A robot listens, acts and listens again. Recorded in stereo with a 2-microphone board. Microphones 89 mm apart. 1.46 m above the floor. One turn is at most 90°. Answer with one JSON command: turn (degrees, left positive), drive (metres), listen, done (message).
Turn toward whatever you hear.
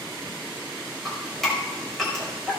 {"turn": 30}
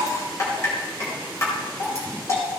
{"turn": 90}
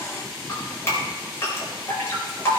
{"turn": 30}
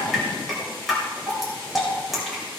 {"done": "Facing the dripping, over 4 m away."}